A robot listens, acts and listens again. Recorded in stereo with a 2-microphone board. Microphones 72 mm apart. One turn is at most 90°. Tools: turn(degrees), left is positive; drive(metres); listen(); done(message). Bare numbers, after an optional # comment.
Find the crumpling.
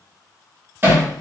listen()
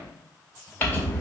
# The crumpling: about 20° left or 160° left.
turn(20)
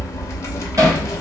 # So it is at 140° left.
turn(90)
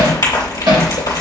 # The crumpling is now 85° left.
turn(85)
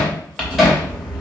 # The crumpling is now 15° left.
turn(15)
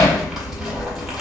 done("Facing the crumpling.")